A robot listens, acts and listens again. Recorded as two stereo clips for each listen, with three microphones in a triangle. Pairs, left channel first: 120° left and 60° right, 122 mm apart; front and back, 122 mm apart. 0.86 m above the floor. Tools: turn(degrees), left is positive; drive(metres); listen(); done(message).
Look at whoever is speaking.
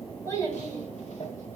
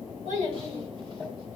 turn(degrees=-175)
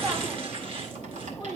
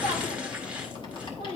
turn(degrees=15)
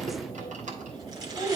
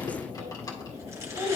done("Found it: a child speaking, straight ahead.")